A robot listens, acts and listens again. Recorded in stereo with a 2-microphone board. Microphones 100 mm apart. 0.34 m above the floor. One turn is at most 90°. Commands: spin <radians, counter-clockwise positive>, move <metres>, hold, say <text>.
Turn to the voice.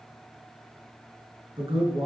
spin -1.05
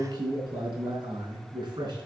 spin -0.79
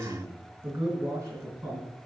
spin -0.44
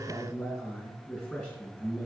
spin 0.26
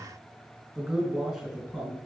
say Found it: a man speaking, straight ahead.